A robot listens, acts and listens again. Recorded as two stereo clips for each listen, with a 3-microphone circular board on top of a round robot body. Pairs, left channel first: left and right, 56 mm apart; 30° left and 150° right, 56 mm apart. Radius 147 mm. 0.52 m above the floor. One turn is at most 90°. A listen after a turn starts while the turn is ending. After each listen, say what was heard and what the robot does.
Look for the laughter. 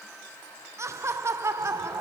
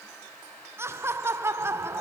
The laughter: 115° right. Turn 90° right.
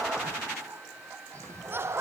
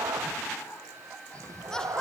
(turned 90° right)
The laughter is now 45° right. Turn 45° right.
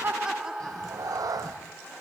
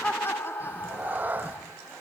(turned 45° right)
The laughter is now 15° right. Turn 15° right.
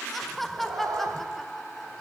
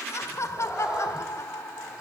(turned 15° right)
Facing the laughter.